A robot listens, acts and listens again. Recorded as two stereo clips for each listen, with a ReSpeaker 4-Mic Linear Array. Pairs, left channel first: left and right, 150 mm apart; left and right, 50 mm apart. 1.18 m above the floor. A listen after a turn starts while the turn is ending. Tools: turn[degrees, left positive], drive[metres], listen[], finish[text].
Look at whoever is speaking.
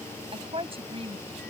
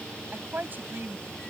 Thought: The woman speaking: about 40° right or 140° right.
Action: turn[-40]
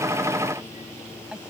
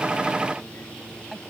Action: finish[Facing the woman speaking.]